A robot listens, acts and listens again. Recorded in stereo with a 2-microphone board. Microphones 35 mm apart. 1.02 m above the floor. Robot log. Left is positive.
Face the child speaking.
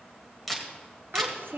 note: The child speaking: about 75° right or 105° right.
cmd yaw -75
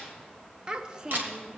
note: So it is at 25° right.
cmd yaw -25
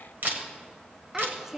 note: The child speaking is now 10° right.
cmd yaw -10
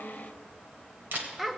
end: Facing the child speaking, under 1 m away.